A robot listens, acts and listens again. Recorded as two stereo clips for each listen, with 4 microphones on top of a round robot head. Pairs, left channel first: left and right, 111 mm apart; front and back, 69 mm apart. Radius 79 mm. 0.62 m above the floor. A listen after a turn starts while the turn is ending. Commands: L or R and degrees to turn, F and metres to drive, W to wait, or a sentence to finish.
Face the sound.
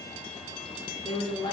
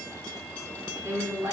L135
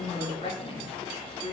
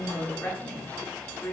L65
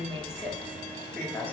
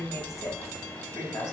L20
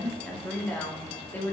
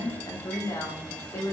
L25
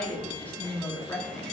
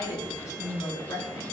L20
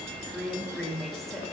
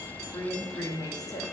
Facing the woman speaking, 1 to 2 m away.